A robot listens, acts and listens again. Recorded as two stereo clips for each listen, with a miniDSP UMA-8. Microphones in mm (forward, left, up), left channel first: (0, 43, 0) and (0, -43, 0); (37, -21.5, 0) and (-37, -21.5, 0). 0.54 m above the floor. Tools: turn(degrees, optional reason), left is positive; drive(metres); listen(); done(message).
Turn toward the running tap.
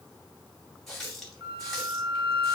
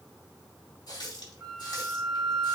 done("Facing the running tap, 2 to 4 m away.")